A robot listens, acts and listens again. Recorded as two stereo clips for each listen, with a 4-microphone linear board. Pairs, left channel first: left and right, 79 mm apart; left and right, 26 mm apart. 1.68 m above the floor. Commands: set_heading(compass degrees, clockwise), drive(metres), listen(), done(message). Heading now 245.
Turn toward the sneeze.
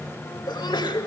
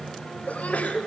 set_heading(175)
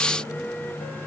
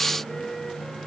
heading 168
listen()
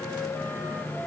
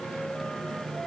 done("I heard a sneeze, but can't make it out now. It was about 5° right or 30° left.")